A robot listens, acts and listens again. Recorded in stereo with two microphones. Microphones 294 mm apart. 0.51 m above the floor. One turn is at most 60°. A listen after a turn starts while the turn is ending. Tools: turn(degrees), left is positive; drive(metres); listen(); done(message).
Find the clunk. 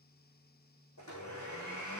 listen()
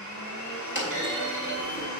turn(degrees=40)
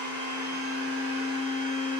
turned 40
listen()
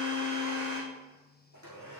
done("I heard a clunk, but can't make it out now. It was about straight ahead or 100° left.")